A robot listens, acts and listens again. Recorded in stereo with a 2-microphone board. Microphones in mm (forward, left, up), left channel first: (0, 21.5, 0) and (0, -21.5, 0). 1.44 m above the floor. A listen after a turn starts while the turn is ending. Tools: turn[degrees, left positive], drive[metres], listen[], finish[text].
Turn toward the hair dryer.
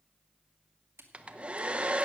Thought: The hair dryer: about 25° right or 155° right.
Action: turn[-25]
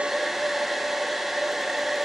Action: finish[Facing the hair dryer, under 1 m away.]